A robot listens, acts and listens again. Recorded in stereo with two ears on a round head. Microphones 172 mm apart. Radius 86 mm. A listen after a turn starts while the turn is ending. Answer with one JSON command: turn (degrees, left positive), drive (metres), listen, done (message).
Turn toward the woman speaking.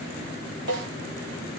{"listen": true}
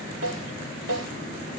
{"listen": true}
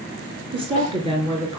{"turn": -25}
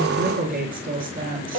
{"turn": -130}
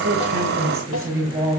{"turn": -15}
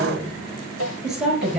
{"done": "Found it: a woman speaking, straight ahead, over 4 m away."}